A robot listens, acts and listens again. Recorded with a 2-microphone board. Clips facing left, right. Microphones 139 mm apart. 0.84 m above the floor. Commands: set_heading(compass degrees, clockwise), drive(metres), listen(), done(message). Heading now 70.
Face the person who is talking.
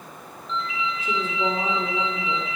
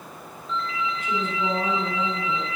set_heading(35)
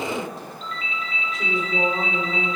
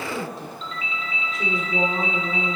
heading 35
done("Found it: a woman speaking, straight ahead, 2 to 4 m away.")